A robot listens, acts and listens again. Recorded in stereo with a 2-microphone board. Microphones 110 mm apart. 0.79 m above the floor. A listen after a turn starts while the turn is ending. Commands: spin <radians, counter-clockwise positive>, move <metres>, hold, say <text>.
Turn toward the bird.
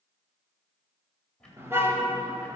hold
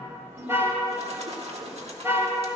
spin -1.22
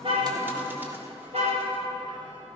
hold
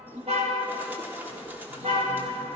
spin -0.35
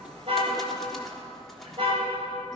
hold
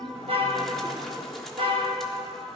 say Facing the bird.